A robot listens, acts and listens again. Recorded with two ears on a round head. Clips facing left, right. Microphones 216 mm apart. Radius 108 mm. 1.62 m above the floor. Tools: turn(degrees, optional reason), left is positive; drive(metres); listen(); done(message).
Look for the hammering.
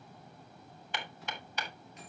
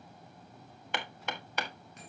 turn(degrees=-50, reason="The hammering: about 50° right or 130° right.")
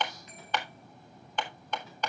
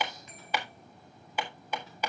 turn(degrees=-10, reason="So it is at 10° right.")
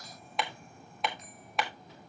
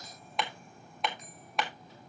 done("Facing the hammering.")